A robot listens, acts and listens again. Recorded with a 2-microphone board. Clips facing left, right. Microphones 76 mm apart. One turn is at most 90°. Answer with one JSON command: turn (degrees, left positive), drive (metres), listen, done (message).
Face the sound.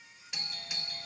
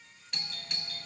{"turn": 30}
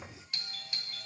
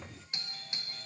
{"turn": -25}
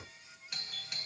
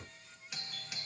{"done": "Found it: a doorbell, straight ahead."}